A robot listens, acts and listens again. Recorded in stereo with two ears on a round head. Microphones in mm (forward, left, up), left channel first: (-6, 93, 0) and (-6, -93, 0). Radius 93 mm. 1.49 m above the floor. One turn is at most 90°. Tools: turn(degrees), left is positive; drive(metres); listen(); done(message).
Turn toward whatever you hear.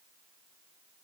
listen()
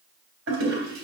turn(degrees=-70)
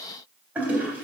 turn(degrees=-10)
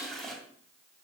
done("Facing the toilet flushing.")